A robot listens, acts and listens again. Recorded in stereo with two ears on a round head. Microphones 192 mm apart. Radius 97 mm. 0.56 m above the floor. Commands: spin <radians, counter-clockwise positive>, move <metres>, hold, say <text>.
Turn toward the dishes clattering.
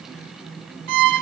hold
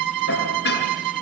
spin 0.87
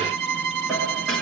hold
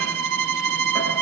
hold
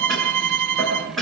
say Found it: dishes clattering, straight ahead, over 4 m away.